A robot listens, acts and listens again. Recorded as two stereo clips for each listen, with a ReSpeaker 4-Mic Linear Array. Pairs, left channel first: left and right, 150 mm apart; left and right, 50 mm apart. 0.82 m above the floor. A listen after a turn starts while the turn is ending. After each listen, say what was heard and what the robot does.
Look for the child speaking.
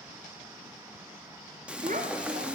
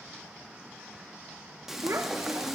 The child speaking: about 65° right or 115° right. Turn 65° right.
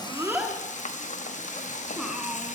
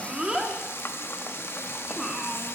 Keep listening.
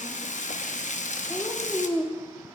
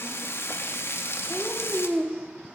Found it: a child speaking, straight ahead.